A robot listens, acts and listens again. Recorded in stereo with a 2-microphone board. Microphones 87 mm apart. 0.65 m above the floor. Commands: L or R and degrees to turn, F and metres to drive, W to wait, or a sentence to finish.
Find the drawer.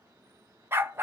W
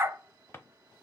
L25
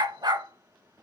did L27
L125
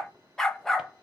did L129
W
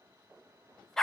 W
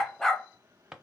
Facing the drawer, under 1 m away.